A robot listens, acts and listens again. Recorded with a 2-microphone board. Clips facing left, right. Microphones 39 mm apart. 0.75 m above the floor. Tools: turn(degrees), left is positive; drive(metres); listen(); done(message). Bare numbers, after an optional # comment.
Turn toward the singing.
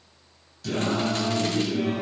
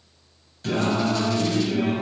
# The singing: about 35° right or 145° right.
turn(-35)
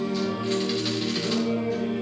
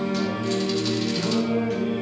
# So it is at 110° right.
turn(-110)
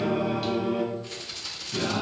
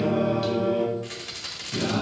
done("Facing the singing.")